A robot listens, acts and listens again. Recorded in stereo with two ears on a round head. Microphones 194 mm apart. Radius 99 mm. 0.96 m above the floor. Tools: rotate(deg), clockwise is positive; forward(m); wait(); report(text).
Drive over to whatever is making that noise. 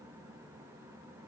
wait()
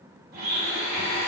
rotate(45)
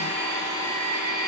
rotate(90)
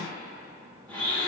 forward(1.0)
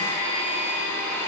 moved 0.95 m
rotate(-10)
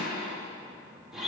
forward(1.0)
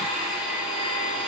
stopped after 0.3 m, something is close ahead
report("Arrived at the blender, straight ahead.")